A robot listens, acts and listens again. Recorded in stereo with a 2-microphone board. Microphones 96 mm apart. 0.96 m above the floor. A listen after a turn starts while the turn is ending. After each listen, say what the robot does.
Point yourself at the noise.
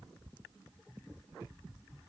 Keep listening.
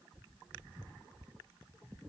Keep listening.
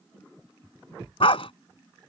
Turn 75° left.
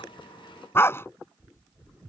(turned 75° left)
Turn 25° left.
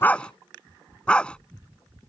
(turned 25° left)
Turn 10° left.
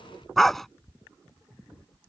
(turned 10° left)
Facing the dog barking.